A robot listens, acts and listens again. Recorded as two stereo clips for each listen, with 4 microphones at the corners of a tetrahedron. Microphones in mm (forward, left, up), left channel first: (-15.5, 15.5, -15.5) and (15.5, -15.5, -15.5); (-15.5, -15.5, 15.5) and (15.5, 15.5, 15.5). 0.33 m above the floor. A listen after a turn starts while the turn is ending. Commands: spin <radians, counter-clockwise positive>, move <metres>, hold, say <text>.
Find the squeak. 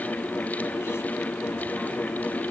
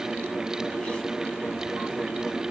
hold
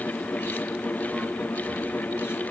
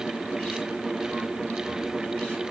hold
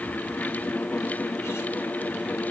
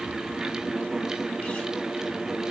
say I can't make out a squeak to turn to.